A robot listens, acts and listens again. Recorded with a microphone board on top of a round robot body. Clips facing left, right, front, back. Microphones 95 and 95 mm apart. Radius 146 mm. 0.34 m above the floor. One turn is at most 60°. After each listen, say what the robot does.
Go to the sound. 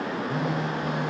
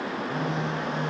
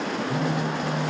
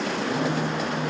Turn 10° left.
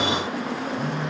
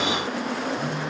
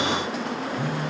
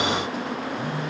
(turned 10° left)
Drive 1.0 m forward.
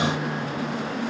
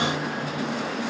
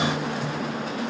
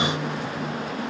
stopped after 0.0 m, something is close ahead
Keep listening.
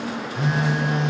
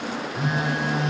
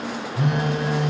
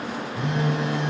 Something is in my way. I am facing the phone buzzing but have not reached it.